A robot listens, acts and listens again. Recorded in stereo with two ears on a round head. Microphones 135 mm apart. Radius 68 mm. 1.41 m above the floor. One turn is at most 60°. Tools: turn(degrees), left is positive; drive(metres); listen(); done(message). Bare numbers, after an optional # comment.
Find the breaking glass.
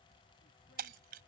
# The breaking glass: about 70° right or 110° right.
turn(-60)
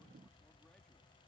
listen()
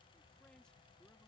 done("I heard breaking glass, but can't make it out now. It was about 10° right or 50° right.")